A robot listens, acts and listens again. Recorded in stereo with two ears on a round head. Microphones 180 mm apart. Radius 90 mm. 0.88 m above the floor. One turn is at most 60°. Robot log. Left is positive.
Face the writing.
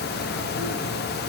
cmd idle
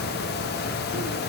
cmd idle
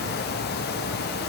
end: I can't make out writing.